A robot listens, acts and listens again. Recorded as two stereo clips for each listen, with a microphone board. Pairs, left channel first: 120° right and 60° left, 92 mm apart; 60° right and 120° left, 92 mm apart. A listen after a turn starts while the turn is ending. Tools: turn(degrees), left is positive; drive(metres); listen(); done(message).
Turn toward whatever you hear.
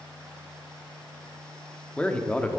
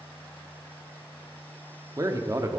turn(degrees=165)
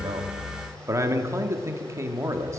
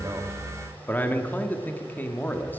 done("Facing the man speaking, 1 to 2 m away.")